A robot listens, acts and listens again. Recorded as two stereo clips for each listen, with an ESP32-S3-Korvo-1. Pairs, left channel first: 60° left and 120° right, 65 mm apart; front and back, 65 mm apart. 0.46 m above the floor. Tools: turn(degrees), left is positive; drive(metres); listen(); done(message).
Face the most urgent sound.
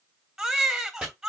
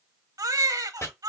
turn(degrees=155)
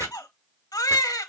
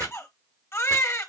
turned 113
turn(degrees=45)
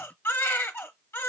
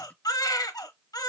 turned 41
done("Found it: a baby crying, straight ahead, under 1 m away.")